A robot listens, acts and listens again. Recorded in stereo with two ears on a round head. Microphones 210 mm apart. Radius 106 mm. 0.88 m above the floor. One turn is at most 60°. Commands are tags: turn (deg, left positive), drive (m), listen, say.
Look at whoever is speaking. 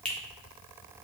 <listen/>
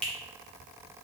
<listen/>
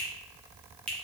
<say>I can't make out anyone speaking, only a finger snap.</say>